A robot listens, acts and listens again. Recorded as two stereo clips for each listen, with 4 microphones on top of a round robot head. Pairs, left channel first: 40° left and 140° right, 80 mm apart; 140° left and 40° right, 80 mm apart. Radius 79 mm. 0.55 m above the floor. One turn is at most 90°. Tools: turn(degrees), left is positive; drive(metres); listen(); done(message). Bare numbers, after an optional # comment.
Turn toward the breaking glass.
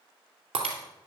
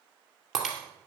# The breaking glass: 125° right.
turn(-90)
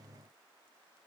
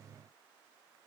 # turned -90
# Nothing new. It was at 35° right.
turn(-35)
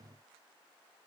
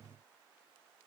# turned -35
done("I heard breaking glass from this way, but can't make it out now.")